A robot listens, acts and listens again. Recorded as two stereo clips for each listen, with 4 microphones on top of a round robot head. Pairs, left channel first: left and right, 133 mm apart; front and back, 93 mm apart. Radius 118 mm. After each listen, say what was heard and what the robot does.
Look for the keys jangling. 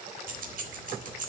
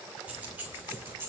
The keys jangling: 110° right. Turn 110° right.
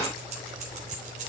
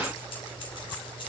The keys jangling is now 50° right. Turn 50° right.
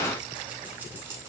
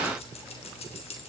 The keys jangling is now 15° right. Turn 15° right.
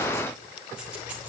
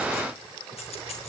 The keys jangling is now 10° right. Turn 10° right.
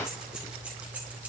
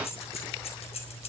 The keys jangling is now 10° right. Turn 10° right.
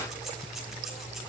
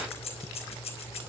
Found it: keys jangling, straight ahead, over 4 m away.